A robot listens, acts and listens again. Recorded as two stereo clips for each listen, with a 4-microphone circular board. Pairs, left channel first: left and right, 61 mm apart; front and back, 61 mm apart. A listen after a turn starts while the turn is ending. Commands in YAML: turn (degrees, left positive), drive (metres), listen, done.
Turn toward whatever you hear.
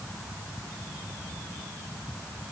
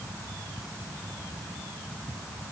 listen: true
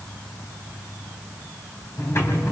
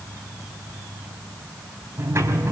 turn: 135
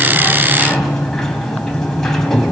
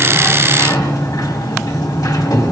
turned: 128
turn: 10
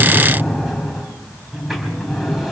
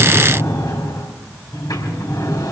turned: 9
done: "Facing the sliding door, 2 to 4 m away."